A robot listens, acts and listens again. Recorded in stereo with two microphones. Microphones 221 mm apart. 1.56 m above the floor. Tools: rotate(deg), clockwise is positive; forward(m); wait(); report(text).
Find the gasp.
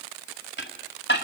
wait()
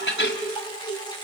wait()
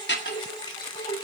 report("I can't make out a gasp to turn to.")